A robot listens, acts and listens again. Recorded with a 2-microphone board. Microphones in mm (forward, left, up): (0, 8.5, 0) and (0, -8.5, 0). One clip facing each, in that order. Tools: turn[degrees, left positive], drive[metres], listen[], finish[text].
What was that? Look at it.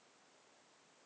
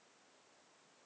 Action: listen[]
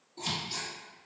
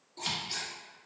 Thought: The scissors: about 40° right or 140° right.
Action: turn[-40]
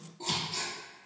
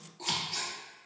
Thought: So it is at 95° right.
Action: turn[-95]
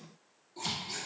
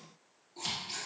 Action: finish[Found it: scissors, straight ahead, 1 to 2 m away.]